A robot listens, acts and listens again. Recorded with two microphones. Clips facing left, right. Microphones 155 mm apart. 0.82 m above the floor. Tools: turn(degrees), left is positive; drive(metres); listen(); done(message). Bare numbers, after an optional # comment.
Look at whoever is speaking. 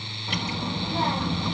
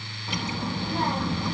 turn(30)
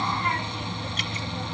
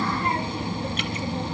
# So it is at 30° right.
turn(-30)
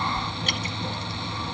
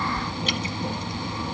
# The child speaking is now 20° right.
turn(-20)
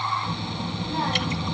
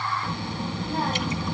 done("Facing the child speaking, 1 to 2 m away.")